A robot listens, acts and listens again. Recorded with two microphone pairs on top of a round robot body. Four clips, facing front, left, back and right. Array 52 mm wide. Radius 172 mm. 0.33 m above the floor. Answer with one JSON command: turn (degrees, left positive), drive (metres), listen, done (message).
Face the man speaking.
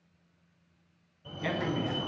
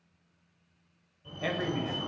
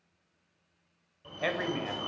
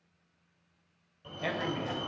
{"turn": 180}
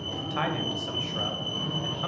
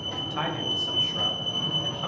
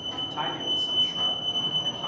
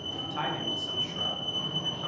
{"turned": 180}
{"turn": 30}
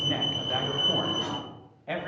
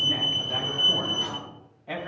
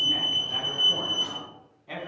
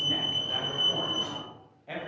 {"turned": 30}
{"turn": 10}
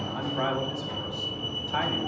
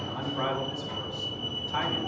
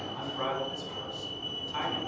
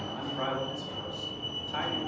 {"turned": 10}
{"done": "Facing the man speaking."}